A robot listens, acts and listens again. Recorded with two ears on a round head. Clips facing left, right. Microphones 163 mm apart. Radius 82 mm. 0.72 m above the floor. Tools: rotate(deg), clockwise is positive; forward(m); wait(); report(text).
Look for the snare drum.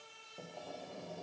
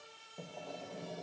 wait()
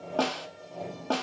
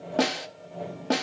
rotate(15)
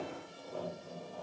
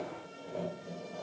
wait()
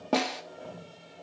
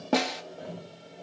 report("Found it: a snare drum, straight ahead, under 1 m away.")